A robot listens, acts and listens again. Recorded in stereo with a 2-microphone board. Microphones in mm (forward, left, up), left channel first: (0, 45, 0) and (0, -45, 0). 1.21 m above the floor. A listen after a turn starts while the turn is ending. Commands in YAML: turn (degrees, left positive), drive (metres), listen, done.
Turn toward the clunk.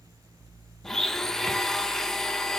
listen: true
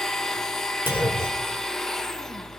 turn: -25
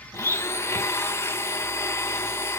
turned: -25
listen: true
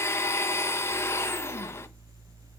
done: "I heard a clunk, but can't make it out now. It was about straight ahead or 130° right."